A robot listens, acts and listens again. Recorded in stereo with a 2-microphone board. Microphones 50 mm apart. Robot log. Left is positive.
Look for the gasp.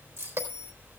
cmd idle
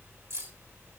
cmd idle
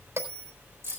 end: I can't make out a gasp, only a bell and keys jangling.